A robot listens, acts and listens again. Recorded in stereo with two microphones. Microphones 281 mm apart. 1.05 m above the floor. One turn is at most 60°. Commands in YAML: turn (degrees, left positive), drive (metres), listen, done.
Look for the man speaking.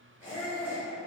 listen: true
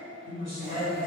turn: -60
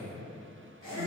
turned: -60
turn: -40
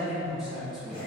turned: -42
done: "Facing the man speaking."